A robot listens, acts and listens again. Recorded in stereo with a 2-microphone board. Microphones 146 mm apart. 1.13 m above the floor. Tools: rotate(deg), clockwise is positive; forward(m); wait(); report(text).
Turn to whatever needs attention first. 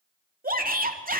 rotate(90)
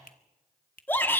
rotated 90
rotate(-15)
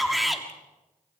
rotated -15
report("Facing the shout, 2 to 4 m away.")